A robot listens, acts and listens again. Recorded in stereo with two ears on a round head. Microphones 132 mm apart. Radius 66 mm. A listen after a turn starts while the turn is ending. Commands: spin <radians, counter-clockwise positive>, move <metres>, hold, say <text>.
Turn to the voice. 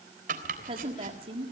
spin -0.70
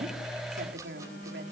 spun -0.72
spin -1.75
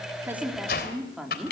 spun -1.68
say Facing the woman speaking, 2 to 4 m away.